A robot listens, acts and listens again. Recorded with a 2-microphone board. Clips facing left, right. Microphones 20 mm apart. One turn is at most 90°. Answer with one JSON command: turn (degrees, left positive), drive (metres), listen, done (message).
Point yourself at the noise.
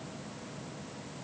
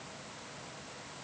{"listen": true}
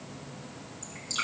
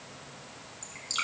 {"turn": -30}
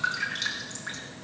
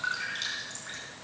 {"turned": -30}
{"turn": 15}
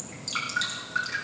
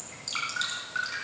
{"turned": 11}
{"done": "Found it: dripping, straight ahead."}